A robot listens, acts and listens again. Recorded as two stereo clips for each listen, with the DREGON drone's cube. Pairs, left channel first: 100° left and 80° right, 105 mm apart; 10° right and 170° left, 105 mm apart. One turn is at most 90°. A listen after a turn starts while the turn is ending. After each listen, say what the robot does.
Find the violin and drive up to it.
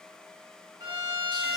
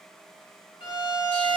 Turn 40° right.
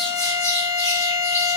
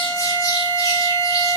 Keep listening.
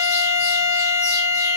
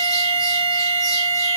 Keep listening.
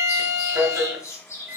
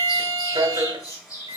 Turn 10° right.
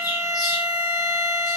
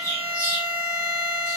Drive 1.0 m forward.
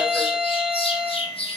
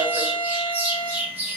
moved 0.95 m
Drive 1.0 m forward.
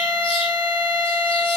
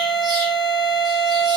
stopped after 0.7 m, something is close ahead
Turn 10° right.
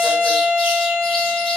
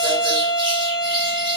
I am next to the violin.